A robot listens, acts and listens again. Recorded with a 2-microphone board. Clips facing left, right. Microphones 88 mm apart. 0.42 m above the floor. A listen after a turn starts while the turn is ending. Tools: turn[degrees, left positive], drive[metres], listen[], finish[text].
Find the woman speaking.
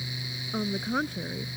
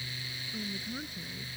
Thought: The woman speaking: about 75° left or 105° left.
Action: turn[75]
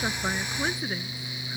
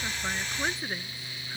Action: finish[Facing the woman speaking.]